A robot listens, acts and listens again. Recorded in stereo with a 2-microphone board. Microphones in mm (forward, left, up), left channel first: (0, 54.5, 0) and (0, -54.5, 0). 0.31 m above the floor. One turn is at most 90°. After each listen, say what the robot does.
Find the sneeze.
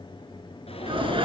Turn 55° right.
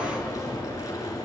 Keep listening.
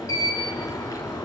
I heard a sneeze, but can't make it out now. It was about straight ahead or 70° right.